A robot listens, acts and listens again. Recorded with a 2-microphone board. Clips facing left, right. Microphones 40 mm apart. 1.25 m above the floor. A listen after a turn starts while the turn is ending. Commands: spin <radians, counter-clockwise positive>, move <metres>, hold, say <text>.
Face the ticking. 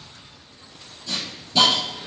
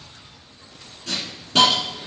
hold
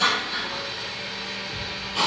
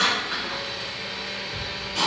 spin 0.52
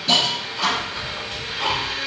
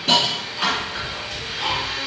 spin 1.92
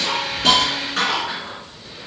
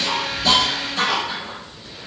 spin -0.17
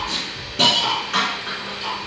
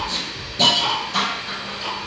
say Facing the ticking, 1 to 2 m away.